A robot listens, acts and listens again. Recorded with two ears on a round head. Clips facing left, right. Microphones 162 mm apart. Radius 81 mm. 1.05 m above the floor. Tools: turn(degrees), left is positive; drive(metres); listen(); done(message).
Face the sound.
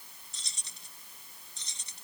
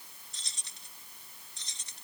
turn(degrees=90)
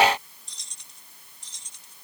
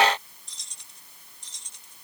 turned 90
done("Facing the keys jangling.")